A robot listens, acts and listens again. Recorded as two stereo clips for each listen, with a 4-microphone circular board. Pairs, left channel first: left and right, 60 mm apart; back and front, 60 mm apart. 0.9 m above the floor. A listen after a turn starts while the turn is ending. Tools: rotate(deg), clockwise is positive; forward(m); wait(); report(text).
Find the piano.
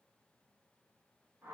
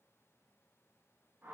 wait()
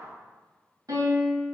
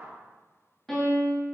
rotate(95)
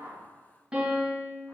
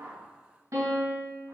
rotate(20)
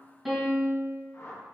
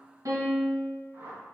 report("Found it: a piano, straight ahead.")